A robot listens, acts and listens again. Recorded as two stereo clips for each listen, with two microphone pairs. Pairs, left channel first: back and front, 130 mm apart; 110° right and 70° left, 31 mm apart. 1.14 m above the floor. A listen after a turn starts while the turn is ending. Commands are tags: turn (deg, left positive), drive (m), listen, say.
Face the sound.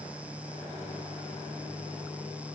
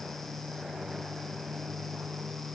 <listen/>
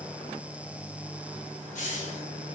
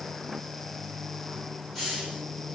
<turn deg="175"/>
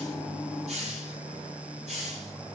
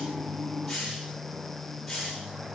<turn deg="-25"/>
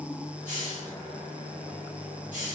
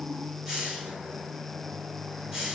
<say>Found it: a hiss, straight ahead, over 4 m away.</say>